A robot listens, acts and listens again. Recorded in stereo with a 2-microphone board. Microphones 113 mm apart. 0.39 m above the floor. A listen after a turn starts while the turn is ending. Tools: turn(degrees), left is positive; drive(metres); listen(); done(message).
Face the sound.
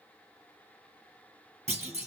turn(degrees=-90)
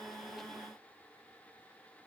done("Facing where the clunk came from. I can't hear it now.")